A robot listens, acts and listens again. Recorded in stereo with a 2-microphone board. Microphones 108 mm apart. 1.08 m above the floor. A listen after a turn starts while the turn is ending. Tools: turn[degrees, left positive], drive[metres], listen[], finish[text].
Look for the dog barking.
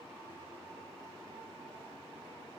Action: listen[]
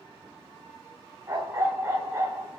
Thought: The dog barking: about 25° right or 155° right.
Action: turn[-25]
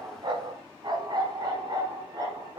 Thought: The dog barking: about 40° right or 140° right.
Action: turn[-40]
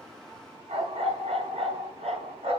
Thought: So it is at 100° right.
Action: turn[-100]
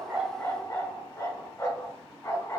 Thought: The dog barking is now 30° left.
Action: turn[30]
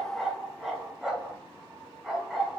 Action: finish[Found it: a dog barking, straight ahead, over 4 m away.]